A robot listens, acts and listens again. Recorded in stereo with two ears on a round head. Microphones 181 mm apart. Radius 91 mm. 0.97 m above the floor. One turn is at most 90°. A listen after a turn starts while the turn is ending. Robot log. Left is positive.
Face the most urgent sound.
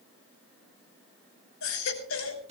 cmd yaw +90
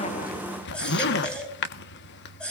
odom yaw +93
end: Found it: a baby crying, straight ahead, over 4 m away.